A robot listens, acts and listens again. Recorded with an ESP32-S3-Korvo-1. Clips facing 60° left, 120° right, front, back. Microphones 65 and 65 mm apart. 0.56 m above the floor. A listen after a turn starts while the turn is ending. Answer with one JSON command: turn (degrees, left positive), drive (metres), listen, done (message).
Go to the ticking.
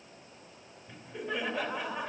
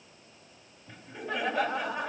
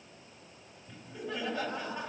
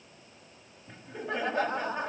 {"listen": true}
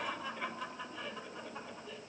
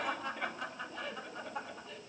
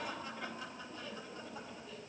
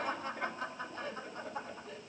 {"listen": true}
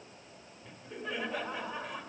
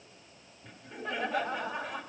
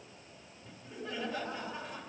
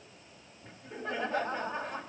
{"done": "I can't make out ticking, only laughter."}